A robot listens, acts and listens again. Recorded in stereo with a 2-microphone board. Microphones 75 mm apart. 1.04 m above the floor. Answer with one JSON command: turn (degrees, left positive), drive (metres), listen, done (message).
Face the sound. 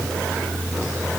{"listen": true}
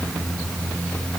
{"listen": true}
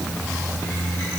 {"done": "I can't make out anything to turn to."}